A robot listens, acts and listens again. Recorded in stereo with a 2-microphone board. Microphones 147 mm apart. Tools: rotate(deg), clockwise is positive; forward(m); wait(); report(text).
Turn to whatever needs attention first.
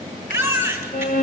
rotate(30)
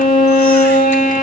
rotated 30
wait()
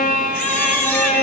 wait()
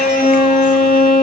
report("I heard a baby crying, but can't make it out now. It was about 15° left or 135° right.")